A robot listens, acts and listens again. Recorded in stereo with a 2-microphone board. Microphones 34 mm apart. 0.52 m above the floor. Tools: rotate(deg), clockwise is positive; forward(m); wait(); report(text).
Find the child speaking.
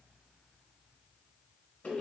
wait()
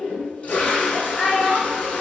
rotate(30)
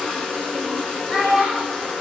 rotate(150)
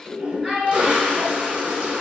report("Facing the child speaking.")